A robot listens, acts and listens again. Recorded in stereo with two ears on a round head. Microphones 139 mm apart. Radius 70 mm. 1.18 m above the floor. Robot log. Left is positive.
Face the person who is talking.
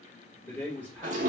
cmd yaw +30
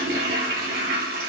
cmd idle
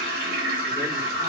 cmd idle
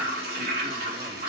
end: I heard a man speaking, but can't make it out now. It was about 20° right or 140° left.